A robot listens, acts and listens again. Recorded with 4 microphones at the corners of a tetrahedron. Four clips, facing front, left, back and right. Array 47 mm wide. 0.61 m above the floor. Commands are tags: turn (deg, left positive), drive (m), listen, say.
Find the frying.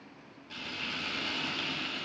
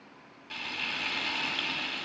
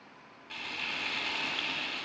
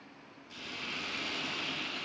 <turn deg="120"/>
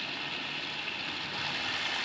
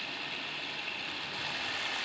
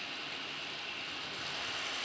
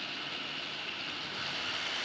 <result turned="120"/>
<turn deg="30"/>
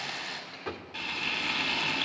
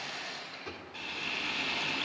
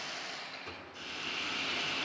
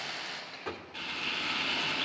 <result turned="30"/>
<say>Found it: frying, straight ahead.</say>